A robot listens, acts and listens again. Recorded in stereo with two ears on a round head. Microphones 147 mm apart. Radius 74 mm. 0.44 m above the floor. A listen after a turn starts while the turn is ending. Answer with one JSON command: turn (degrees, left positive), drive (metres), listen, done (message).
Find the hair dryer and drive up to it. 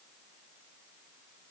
{"listen": true}
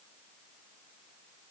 {"listen": true}
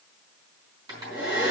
{"turn": -25}
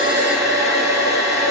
{"drive": 1.0}
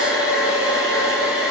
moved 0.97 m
{"drive": 1.0}
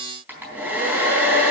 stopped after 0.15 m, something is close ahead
{"turn": -10}
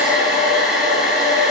{"done": "Blocked. The hair dryer is further on, straight ahead."}